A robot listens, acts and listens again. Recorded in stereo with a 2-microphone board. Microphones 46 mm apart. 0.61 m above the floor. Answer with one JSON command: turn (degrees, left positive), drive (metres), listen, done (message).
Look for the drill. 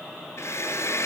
{"turn": 65}
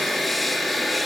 {"done": "Facing the drill, over 4 m away."}